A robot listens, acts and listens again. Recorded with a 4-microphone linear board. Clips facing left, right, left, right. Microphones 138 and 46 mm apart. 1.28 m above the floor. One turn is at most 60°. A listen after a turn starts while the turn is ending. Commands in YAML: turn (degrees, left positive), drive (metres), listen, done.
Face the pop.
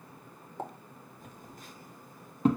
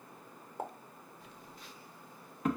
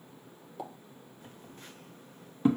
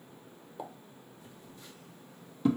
turn: -30
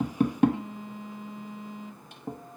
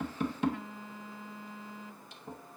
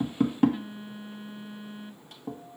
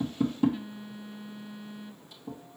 listen: true
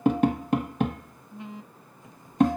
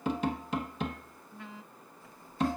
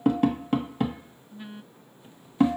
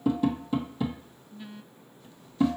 done: "I heard a pop, but can't make it out now. It was about 25° left or 145° right."